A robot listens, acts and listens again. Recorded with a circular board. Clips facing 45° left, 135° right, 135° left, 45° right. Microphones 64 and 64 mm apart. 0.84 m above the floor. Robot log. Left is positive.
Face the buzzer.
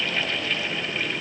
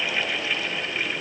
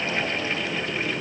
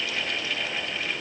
cmd idle
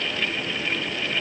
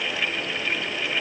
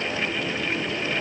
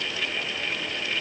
cmd idle
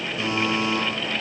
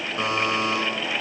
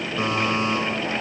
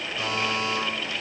note: The buzzer: 170° right.
cmd yaw -170
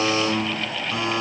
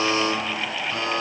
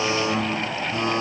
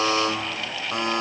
note: The buzzer is now 30° right.
cmd yaw -30
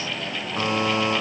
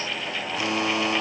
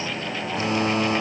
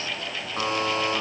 end: Found it: a buzzer, straight ahead.